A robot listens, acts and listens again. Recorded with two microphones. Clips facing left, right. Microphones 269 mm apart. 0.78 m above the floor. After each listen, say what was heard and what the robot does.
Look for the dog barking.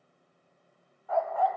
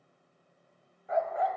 The dog barking: about 20° right or 160° right. Turn 20° right.
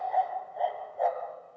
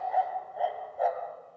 Facing the dog barking.